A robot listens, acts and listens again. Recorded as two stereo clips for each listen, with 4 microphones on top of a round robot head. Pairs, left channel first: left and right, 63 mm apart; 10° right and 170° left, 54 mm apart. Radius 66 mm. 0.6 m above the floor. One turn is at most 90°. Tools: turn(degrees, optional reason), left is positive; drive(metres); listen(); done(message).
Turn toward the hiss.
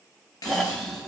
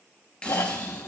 turn(degrees=60, reason="The hiss: 60° left.")
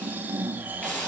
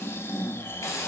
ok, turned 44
turn(degrees=15, reason="The hiss is now 15° left.")
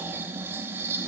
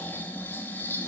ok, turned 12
listen()
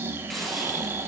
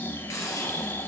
done("Facing the hiss.")